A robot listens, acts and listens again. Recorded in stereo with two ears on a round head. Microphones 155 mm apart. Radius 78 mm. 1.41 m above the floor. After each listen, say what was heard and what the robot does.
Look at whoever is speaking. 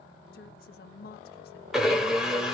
The woman speaking: about 55° left or 125° left. Turn 55° left.
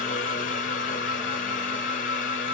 Keep listening.
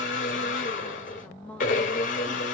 So it is at 10° left. Turn 10° left.
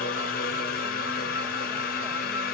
Keep listening.
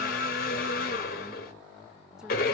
Keep listening.
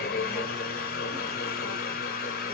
I heard a woman speaking from this way, but can't make it out now.